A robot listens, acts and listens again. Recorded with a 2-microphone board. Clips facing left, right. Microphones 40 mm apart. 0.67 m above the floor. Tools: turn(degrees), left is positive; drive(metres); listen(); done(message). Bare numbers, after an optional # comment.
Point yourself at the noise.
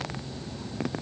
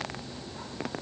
listen()
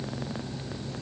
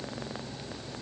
listen()
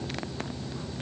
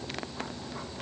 done("I can't make out anything to turn to.")